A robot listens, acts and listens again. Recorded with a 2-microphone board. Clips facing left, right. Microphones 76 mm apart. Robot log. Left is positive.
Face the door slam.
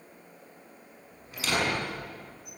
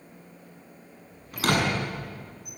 note: The door slam: about 50° right or 130° right.
cmd yaw -50
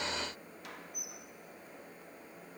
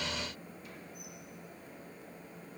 cmd idle
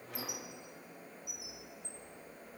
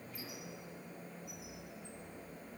end: I heard a door slam, but can't make it out now. It was about straight ahead or 80° right.